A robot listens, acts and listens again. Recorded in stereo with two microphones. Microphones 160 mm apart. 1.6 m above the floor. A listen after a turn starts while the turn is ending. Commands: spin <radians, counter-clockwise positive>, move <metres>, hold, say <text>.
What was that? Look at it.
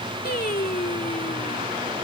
spin 1.22
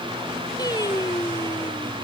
spin 0.44
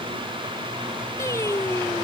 spin 0.35
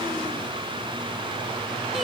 hold
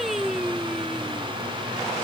say Facing the singing.